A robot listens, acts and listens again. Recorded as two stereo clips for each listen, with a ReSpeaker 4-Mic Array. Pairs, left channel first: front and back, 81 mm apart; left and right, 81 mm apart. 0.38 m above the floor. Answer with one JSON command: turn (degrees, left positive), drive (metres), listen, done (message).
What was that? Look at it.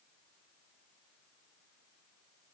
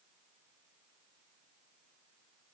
{"listen": true}
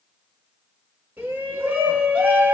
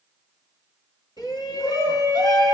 {"turn": 110}
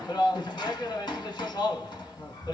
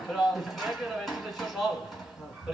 {"turn": -10}
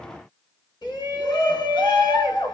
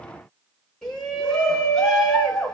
{"done": "Found it: a shout, straight ahead."}